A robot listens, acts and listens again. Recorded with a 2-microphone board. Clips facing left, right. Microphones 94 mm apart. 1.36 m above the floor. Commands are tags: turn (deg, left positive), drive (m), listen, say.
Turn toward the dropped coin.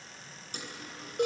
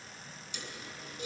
<turn deg="40"/>
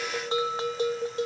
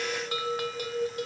<listen/>
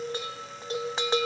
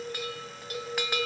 <say>I heard a dropped coin, but can't make it out now. It was about straight ahead or 100° left.</say>